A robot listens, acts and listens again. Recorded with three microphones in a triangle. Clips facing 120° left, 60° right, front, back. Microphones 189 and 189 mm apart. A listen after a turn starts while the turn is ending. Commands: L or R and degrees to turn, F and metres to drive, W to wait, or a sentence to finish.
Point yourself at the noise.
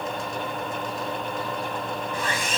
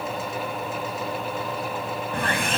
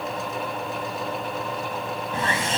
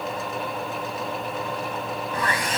R60
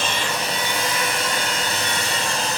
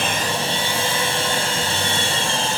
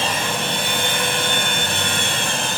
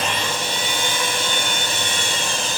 Facing the sawing, 1 to 2 m away.